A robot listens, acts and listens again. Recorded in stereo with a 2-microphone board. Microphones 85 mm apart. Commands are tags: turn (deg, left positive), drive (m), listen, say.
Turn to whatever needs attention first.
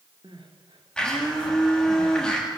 <turn deg="-90"/>
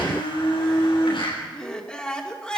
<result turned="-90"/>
<turn deg="10"/>
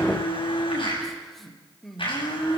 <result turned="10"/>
<say>Found it: crying, straight ahead, 2 to 4 m away.</say>